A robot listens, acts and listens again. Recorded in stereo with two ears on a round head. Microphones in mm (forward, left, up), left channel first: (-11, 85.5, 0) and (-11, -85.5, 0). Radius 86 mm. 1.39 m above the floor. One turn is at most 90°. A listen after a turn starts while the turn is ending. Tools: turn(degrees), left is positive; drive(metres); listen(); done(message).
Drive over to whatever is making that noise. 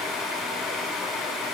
listen()
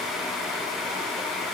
listen()
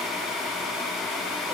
done("I can't make out anything.")